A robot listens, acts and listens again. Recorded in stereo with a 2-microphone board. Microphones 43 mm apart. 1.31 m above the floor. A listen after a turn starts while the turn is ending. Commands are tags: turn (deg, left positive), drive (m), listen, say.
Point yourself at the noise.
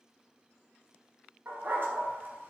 <turn deg="-50"/>
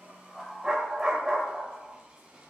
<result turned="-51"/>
<turn deg="-15"/>
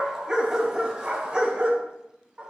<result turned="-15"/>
<turn deg="-25"/>
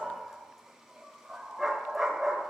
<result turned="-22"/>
<say>Found it: a dog barking, straight ahead, 2 to 4 m away.</say>